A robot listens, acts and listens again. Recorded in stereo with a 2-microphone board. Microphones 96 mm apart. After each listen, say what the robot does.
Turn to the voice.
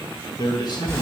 Turn 45° left.
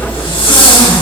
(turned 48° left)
Keep listening.
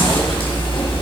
Keep listening.
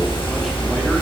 I heard a man speaking, but can't make it out now. It was about straight ahead or 85° left.